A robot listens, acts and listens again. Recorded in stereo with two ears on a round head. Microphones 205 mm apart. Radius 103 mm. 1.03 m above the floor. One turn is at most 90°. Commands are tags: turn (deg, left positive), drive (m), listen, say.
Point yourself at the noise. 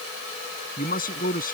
<turn deg="40"/>
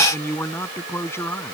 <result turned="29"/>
<turn deg="10"/>
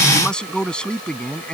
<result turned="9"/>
<say>Found it: a man speaking, straight ahead.</say>